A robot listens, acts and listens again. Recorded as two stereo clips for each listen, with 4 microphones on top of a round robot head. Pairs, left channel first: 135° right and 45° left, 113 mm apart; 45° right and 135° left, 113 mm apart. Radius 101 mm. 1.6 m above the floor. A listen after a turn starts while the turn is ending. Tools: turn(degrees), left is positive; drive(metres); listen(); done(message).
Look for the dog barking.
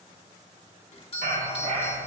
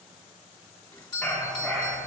turn(degrees=35)
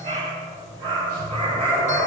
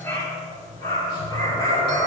done("Found it: a dog barking, straight ahead, over 4 m away.")